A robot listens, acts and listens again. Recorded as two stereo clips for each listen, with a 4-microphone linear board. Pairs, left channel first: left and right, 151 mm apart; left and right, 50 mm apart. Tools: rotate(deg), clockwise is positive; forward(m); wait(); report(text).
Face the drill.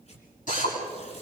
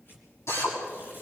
rotate(-60)
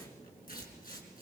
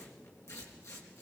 wait()
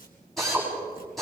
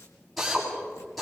report("Facing the drill.")